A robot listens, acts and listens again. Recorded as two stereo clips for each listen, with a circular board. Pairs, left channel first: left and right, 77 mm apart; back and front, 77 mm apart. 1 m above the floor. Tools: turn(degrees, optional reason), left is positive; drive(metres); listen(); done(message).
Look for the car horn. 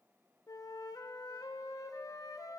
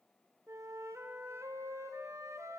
listen()
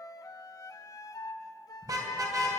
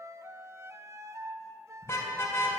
turn(degrees=-125, reason="The car horn: 125° right.")
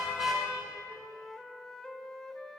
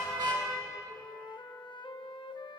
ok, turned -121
done("Facing the car horn.")